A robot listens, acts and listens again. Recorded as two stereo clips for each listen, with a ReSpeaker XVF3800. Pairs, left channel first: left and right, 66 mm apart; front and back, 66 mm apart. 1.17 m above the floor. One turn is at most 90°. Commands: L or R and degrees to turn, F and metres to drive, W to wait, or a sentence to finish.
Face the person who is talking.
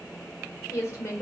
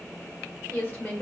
L55
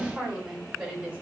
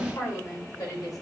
R20
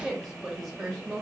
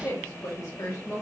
Found it: a woman speaking, straight ahead, 2 to 4 m away.